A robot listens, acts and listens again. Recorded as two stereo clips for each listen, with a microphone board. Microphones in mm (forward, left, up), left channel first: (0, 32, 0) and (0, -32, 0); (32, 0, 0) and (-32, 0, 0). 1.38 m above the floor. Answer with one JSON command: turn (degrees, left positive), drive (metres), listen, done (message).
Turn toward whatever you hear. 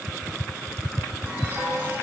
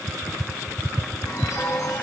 {"turn": -35}
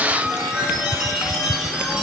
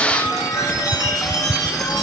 {"turn": -10}
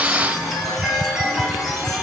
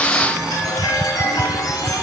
{"done": "Found it: a chime, straight ahead, 1 to 2 m away."}